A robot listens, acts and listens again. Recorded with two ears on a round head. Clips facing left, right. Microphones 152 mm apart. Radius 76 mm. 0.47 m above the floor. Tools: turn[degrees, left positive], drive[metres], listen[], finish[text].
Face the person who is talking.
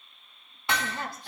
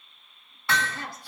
Thought: The woman speaking: about 50° left or 130° left.
Action: turn[50]
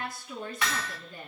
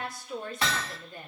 Thought: So it is at 65° left.
Action: turn[65]
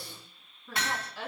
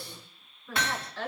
Thought: The woman speaking is now 10° left.
Action: turn[10]
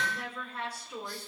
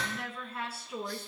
Action: finish[Facing the woman speaking, over 4 m away.]